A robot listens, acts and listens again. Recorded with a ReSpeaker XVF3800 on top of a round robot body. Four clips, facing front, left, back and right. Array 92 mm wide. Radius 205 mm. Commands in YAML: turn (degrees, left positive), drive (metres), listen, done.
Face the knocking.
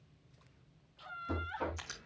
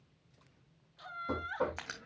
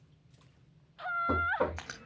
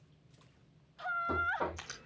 turn: 165
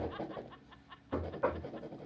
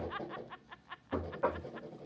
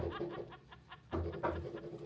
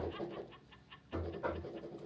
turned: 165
turn: 45
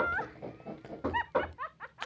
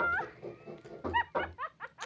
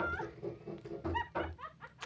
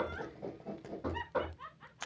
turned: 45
done: "Found it: knocking, straight ahead."